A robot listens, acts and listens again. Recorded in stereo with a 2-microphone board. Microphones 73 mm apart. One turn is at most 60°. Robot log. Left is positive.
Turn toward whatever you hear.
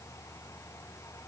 cmd idle
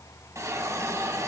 note: The hiss: about 40° right or 140° right.
cmd yaw -40
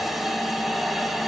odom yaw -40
end: Found it: a hiss, straight ahead.